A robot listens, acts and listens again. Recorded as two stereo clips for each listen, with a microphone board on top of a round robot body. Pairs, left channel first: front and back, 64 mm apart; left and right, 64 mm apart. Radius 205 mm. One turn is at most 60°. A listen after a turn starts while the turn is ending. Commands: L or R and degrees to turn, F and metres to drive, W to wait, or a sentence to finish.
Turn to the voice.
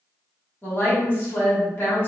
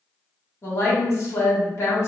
L50
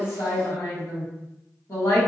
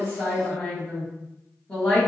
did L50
L15
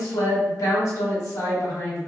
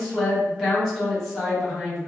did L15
Facing the woman speaking, 1 to 2 m away.